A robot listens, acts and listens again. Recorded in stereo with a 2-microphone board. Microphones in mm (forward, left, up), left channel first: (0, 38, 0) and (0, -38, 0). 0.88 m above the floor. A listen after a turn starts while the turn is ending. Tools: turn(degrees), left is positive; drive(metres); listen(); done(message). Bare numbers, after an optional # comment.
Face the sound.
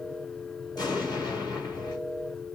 # The explosion: about 65° left or 115° left.
turn(65)
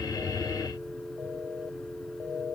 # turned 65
listen()
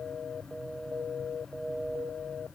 done("I heard an explosion, but can't make it out now. It was about straight ahead or 50° left.")